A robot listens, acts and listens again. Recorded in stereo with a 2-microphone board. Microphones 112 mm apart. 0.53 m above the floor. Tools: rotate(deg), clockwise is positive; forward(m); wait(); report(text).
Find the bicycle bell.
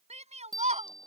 rotate(35)
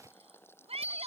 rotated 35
rotate(110)
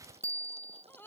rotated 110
rotate(25)
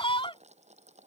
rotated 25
wait()
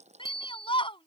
report("Facing the bicycle bell.")